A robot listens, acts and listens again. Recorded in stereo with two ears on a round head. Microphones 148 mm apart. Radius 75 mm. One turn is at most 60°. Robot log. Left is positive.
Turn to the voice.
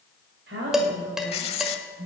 cmd yaw -60
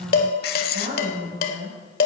note: So it is at 50° right.
cmd yaw -50
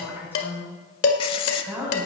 note: The woman speaking is now 15° right.
cmd yaw -15
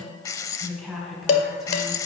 end: Facing the woman speaking.